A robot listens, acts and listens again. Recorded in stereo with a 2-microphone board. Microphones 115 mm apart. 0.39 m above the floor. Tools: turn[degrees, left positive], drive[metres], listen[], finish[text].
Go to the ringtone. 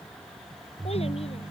Thought: The ringtone: about 75° right or 105° right.
Action: turn[-75]
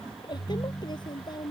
Action: drive[1.0]
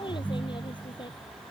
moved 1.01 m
Thought: The ringtone is now 15° right.
Action: turn[-15]
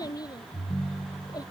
Action: drive[1.0]
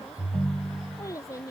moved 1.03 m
Action: drive[1.0]
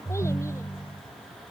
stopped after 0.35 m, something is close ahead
Action: finish[I am next to the ringtone.]